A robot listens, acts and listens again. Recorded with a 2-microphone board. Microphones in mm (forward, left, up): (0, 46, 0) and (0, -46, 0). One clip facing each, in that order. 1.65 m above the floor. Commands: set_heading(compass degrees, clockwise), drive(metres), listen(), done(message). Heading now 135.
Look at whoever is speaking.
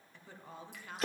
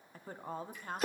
set_heading(175)
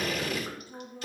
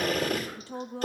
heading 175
set_heading(275)
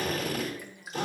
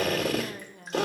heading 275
set_heading(325)
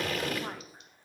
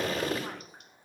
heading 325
listen()
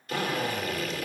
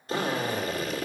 listen()
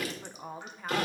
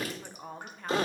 done("Found it: a woman speaking, straight ahead.")